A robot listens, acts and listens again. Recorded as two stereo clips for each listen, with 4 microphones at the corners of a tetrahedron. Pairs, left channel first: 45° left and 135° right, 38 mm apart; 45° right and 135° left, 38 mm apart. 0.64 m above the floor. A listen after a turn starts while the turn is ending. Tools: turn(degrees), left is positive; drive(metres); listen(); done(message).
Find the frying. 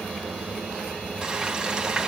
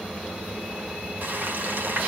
turn(degrees=160)
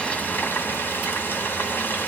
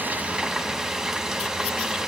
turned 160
turn(degrees=60)
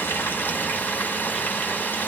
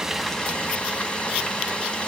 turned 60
turn(degrees=15)
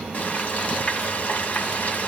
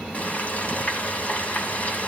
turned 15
done("Facing the frying.")